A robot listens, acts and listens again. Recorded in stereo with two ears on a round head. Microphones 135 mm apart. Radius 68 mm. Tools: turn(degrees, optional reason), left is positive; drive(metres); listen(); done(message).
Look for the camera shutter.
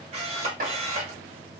turn(degrees=-45, reason="The camera shutter: about 45° right or 135° right.")
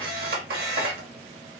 turn(degrees=-85, reason="So it is at 85° right.")
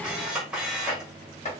done("Found it: a camera shutter, straight ahead, 1 to 2 m away.")